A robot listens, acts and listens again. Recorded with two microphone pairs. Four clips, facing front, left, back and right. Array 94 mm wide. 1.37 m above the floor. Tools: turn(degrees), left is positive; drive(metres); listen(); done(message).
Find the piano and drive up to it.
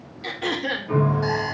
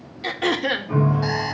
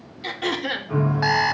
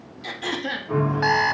turn(degrees=-10)
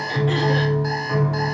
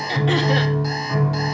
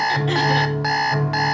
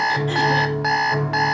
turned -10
drive(metres=1.0)
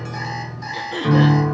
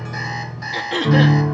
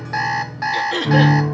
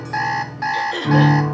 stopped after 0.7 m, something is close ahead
done("Blocked. The piano is further on, straight ahead.")